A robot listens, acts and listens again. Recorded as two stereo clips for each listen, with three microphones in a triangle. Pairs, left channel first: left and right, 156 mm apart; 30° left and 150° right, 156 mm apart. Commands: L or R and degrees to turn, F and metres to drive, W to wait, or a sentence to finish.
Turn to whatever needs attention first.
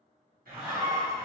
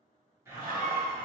R165
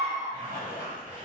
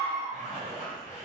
R25
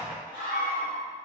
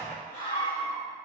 R10
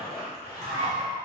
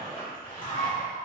Facing the scream.